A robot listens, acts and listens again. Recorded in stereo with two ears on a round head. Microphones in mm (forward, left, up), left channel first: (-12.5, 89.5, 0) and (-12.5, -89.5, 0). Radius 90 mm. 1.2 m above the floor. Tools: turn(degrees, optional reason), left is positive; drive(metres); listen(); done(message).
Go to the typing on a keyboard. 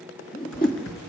turn(degrees=75, reason="The typing on a keyboard: about 75° left or 105° left.")
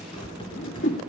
turn(degrees=25, reason="So it is at 25° left.")
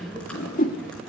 drive(metres=1.0)
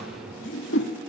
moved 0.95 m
drive(metres=1.0)
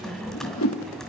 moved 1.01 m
drive(metres=1.0)
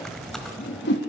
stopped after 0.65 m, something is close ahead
done("Arrived at the typing on a keyboard, straight ahead.")